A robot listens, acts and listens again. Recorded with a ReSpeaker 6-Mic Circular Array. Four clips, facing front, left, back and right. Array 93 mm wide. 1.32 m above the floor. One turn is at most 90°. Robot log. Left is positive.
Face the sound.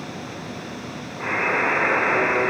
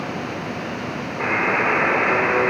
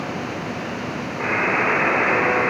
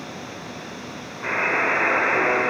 note: The buzzer: 115° left.
cmd yaw +90
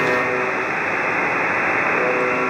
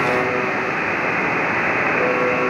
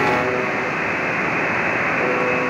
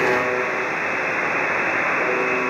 note: The buzzer is now 30° left.
cmd yaw +30
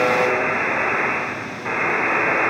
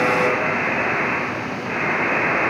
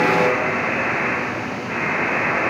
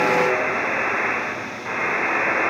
end: Facing the buzzer, 2 to 4 m away.